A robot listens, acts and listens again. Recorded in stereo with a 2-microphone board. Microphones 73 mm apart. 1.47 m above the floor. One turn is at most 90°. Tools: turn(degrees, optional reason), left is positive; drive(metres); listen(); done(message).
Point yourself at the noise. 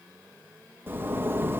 turn(degrees=-30, reason="The zipper: about 30° right or 150° right.")
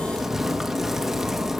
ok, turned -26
done("Facing the zipper, 1 to 2 m away.")